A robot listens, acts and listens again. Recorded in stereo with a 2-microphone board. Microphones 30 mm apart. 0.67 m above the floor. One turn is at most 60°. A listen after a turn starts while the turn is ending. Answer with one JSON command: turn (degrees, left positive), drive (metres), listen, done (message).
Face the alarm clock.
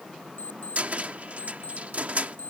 {"turn": 60}
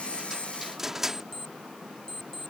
{"turn": 15}
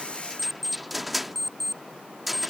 {"done": "Facing the alarm clock."}